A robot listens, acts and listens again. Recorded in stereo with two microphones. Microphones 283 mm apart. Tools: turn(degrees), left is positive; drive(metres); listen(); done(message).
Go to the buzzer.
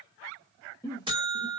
turn(degrees=-15)
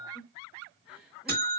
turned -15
turn(degrees=-145)
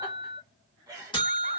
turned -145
turn(degrees=20)
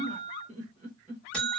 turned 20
drive(metres=1.0)
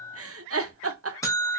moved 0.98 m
turn(degrees=10)
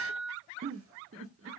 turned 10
drive(metres=1.0)
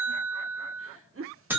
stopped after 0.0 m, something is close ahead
done("Arrived at the buzzer, straight ahead.")